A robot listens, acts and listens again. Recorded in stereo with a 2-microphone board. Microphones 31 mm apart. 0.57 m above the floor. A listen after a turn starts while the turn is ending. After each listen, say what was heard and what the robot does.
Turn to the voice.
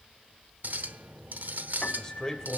The man speaking: about 20° left or 160° left. Turn 20° left.
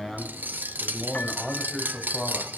Facing the man speaking.